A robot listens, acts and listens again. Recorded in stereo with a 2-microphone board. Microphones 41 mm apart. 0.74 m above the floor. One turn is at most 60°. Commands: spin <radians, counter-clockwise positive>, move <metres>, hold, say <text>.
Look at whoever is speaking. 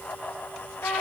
hold
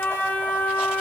hold
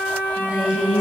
spin -0.35
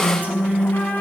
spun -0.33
spin -1.05
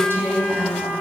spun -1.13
spin -1.05
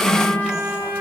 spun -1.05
spin -0.26
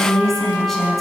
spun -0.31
say Facing the woman speaking, over 4 m away.